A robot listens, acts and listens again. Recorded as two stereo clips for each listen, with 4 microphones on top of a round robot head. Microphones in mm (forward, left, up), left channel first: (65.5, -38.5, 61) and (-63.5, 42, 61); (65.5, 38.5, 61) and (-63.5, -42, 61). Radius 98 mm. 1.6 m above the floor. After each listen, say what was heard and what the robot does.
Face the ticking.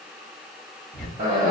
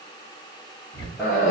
The ticking: 55° left. Turn 55° left.
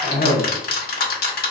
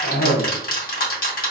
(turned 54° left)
Facing the ticking.